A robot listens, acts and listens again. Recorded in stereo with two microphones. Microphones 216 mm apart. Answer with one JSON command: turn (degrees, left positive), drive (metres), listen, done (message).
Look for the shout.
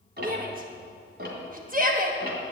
{"turn": -40}
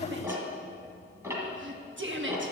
{"turn": -90}
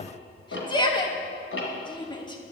{"turn": 25}
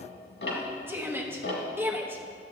{"turn": -10}
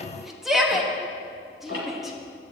{"done": "Facing the shout."}